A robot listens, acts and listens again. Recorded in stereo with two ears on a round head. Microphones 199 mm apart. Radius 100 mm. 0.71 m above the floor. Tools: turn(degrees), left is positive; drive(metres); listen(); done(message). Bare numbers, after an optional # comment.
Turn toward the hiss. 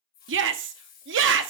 # The hiss: about 45° left or 135° left.
turn(45)
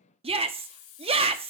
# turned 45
# So it is at 90° left.
turn(90)
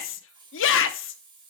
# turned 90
# The hiss is now 20° right.
turn(-20)
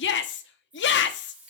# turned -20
done("Found it: a hiss, straight ahead.")